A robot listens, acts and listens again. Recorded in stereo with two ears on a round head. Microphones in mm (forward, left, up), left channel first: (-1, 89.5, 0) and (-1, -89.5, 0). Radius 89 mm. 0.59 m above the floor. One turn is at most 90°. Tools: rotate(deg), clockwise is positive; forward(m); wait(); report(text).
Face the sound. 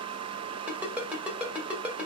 rotate(30)
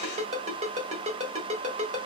rotate(90)
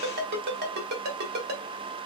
rotate(55)
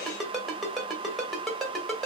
report("Facing the ringtone, 2 to 4 m away.")